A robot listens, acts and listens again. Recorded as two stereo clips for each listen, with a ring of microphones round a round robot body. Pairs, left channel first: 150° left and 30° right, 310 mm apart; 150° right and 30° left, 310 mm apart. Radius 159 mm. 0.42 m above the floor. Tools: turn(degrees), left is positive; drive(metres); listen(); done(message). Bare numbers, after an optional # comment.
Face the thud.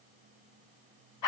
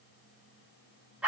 listen()
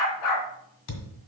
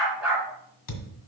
# The thud: straight behind.
turn(180)
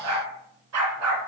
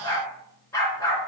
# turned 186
done("Facing where the thud came from. I can't hear it now.")